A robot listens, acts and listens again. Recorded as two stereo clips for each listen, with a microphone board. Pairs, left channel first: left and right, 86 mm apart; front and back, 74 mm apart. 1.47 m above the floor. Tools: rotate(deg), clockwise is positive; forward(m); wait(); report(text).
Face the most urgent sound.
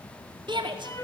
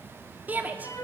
rotate(110)
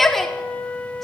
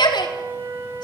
report("Facing the shout.")